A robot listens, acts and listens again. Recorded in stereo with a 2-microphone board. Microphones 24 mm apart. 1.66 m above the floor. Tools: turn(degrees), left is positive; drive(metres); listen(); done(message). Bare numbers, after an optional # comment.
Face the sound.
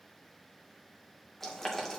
turn(30)
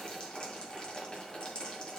# So it is at 140° left.
turn(140)
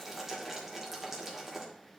# The boiling is now 15° right.
turn(-15)
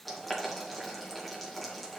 done("Found it: boiling, straight ahead.")